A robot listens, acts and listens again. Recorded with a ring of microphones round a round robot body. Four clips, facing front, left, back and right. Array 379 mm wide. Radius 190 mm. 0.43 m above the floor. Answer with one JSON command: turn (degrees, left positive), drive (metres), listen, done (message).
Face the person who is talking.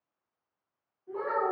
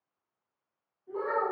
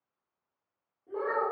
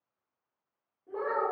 {"turn": -130}
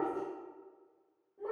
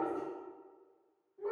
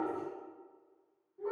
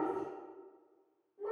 {"turn": -15}
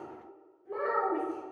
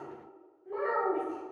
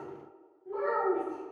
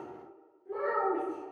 {"done": "Facing the child speaking, 1 to 2 m away."}